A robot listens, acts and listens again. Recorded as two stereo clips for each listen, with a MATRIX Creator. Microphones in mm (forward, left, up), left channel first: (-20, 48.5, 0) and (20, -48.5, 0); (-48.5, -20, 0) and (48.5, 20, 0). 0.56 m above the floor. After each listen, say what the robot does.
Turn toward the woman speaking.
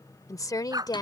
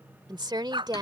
Turn 65° left.
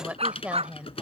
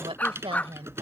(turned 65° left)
Turn 10° left.
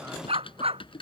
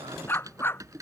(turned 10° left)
Keep listening.
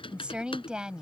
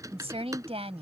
Turn 15° left.
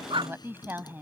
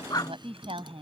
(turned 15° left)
Found it: a woman speaking, straight ahead.